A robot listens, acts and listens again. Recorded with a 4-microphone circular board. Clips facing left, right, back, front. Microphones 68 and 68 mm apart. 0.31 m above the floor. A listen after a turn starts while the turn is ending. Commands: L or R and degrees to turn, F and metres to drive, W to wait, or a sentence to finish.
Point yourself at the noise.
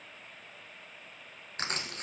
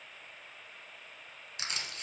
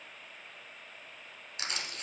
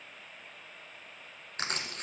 L45
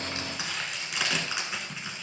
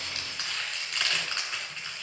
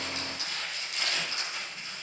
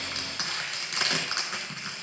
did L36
L10
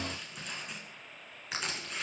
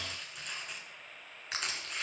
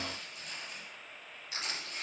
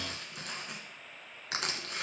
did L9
Facing the crushing, 1 to 2 m away.